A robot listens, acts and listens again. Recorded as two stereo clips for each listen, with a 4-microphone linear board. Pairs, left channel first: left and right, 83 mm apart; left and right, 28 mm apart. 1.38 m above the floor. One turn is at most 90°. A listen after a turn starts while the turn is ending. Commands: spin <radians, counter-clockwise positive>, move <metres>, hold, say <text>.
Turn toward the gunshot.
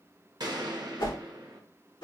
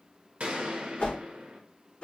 spin -1.05
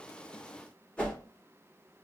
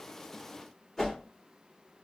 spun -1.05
hold
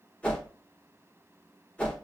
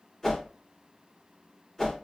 say I heard a gunshot, but can't make it out now. It was about straight ahead or 60° right.